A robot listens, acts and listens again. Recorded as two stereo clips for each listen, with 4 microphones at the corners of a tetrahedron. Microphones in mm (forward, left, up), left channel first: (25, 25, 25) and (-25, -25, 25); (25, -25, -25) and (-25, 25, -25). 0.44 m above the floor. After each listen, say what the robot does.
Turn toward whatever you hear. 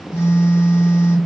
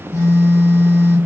Facing the phone buzzing.